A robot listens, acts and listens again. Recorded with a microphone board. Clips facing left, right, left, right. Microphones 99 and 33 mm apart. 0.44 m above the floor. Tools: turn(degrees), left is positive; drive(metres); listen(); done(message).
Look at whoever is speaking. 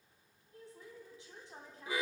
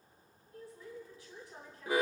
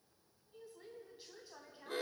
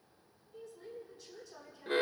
turn(degrees=25)
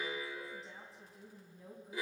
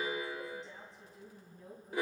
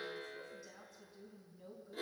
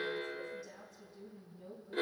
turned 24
done("Found it: a woman speaking, straight ahead, 2 to 4 m away.")